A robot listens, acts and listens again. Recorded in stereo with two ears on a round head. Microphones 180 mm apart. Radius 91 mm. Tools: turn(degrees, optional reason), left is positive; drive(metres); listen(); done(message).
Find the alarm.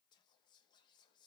listen()
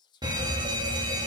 turn(degrees=-20, reason="The alarm: about 20° right or 160° right.")
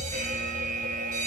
turn(degrees=-135, reason="So it is at 135° right.")
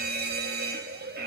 turn(degrees=-55, reason="The alarm is now 55° right.")
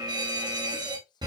turn(degrees=-20, reason="The alarm is now 20° right.")
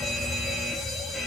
done("Facing the alarm, under 1 m away.")